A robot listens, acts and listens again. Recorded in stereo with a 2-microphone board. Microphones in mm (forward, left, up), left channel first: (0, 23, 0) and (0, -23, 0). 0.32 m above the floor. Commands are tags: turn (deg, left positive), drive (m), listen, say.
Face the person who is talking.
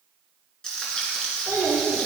<turn deg="-60"/>
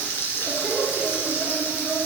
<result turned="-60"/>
<turn deg="10"/>
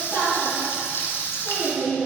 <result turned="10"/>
<turn deg="15"/>
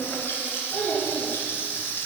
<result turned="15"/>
<turn deg="15"/>
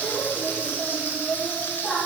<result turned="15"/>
<say>Facing the child speaking, 2 to 4 m away.</say>